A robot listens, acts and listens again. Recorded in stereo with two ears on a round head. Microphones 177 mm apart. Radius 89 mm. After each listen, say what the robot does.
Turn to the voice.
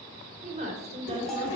Turn 30° right.
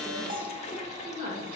Turn 30° right.
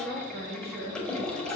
Turn 135° right.
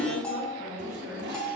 Turn 15° right.
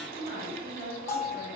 Facing the woman speaking, 2 to 4 m away.